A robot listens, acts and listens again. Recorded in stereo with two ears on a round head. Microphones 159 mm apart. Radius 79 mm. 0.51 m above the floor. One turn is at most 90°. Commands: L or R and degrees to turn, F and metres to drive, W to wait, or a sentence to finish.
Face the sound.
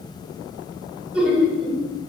L30
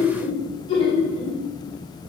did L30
L90
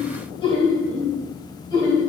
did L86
L20
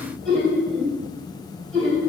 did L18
Found it: laughter, straight ahead, 2 to 4 m away.